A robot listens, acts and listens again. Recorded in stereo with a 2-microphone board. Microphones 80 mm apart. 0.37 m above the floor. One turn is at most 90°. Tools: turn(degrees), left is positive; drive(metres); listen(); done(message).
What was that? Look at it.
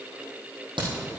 turn(degrees=-90)
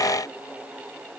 done("Facing where the crack came from. I can't hear it now.")